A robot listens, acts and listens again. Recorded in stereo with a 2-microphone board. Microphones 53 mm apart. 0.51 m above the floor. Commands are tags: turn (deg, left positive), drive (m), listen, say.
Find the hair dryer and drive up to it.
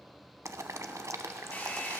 <turn deg="30"/>
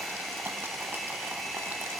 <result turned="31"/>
<drive m="1.0"/>
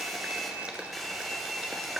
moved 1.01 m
<drive m="1.0"/>
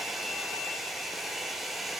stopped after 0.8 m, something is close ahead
<say>Arrived at the hair dryer, straight ahead.</say>